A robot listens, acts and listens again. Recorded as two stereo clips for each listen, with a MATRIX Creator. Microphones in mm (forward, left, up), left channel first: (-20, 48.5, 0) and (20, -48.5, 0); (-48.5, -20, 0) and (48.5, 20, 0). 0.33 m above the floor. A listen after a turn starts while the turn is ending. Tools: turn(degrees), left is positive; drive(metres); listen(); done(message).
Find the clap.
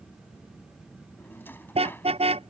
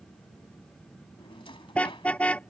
listen()
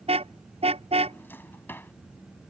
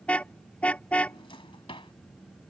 listen()
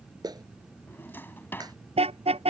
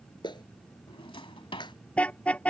turn(degrees=-115)
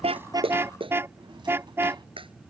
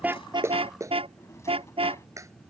turn(degrees=-35)
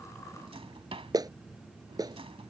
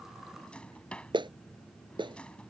turn(degrees=-15)
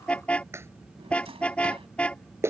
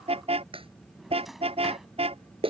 done("Facing the clap.")